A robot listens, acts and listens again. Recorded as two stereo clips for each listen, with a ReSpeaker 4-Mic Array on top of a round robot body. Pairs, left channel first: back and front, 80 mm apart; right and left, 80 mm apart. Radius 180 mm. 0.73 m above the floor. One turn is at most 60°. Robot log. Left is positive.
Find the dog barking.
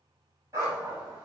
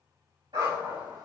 note: The dog barking: 60° left.
cmd yaw +60
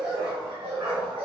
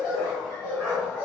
end: Facing the dog barking.